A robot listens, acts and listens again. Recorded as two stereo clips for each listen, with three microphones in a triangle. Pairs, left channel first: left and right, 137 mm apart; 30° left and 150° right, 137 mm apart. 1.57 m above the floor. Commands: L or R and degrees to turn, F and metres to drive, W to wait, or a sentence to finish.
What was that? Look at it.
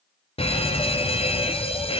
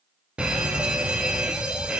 L130
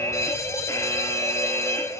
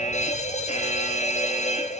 L25
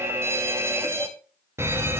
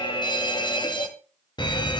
R20
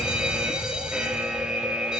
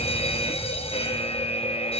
Facing the fire alarm.